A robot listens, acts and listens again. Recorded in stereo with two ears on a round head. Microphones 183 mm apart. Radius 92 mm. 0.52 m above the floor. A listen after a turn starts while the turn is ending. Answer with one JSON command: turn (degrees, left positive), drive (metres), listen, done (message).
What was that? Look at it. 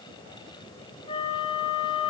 {"turn": 30}
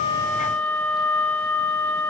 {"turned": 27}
{"turn": 10}
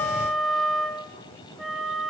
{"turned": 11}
{"done": "Facing the flute."}